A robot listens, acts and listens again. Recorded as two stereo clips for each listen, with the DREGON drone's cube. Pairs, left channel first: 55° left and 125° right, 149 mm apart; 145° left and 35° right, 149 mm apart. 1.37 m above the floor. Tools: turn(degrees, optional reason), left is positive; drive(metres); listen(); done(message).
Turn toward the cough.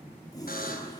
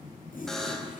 listen()
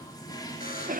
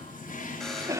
turn(degrees=-105, reason="The cough: 105° right.")
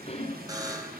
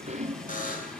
done("Found it: a cough, straight ahead, 1 to 2 m away.")